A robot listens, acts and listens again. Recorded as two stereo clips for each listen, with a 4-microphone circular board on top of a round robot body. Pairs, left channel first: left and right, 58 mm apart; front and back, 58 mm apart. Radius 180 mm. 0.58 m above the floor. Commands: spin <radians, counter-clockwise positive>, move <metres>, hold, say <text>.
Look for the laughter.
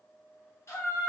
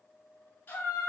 spin 0.87
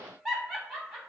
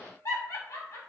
say Found it: laughter, straight ahead, 2 to 4 m away.